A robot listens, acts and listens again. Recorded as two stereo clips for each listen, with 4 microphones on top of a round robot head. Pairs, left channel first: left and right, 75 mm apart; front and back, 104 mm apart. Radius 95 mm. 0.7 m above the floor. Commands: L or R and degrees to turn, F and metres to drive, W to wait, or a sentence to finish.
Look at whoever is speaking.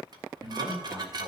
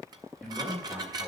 R100
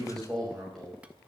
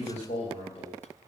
Facing the man speaking, over 4 m away.